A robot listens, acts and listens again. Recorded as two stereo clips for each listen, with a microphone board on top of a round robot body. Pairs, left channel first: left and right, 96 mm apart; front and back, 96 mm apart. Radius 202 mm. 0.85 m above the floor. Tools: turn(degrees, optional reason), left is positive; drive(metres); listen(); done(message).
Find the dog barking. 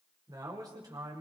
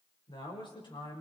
listen()
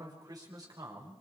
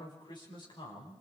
listen()
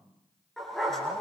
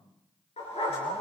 done("Found it: a dog barking, straight ahead.")